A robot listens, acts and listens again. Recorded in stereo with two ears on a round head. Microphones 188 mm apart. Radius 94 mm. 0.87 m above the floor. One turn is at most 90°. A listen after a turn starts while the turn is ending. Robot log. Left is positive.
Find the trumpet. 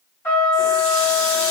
cmd yaw +30
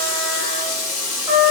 note: So it is at 15° right.
cmd yaw -15
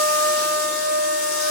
end: Facing the trumpet, 1 to 2 m away.